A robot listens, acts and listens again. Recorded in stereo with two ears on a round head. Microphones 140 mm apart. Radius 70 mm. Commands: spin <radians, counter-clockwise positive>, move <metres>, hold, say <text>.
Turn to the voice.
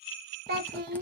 spin -1.13
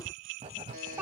spin -0.26
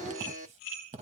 hold
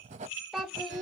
say Facing the child speaking.